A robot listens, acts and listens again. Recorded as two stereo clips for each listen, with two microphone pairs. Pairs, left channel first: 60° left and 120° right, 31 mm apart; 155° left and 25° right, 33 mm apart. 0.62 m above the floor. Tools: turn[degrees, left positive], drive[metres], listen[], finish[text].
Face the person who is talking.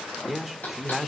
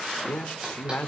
Thought: The man speaking: 155° left.
Action: turn[155]
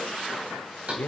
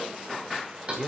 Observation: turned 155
Thought: The man speaking is now 45° left.
Action: turn[45]
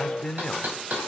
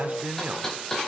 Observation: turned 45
Thought: The man speaking is now 10° right.
Action: turn[-10]
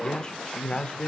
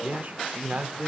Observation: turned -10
Action: finish[Found it: a man speaking, straight ahead.]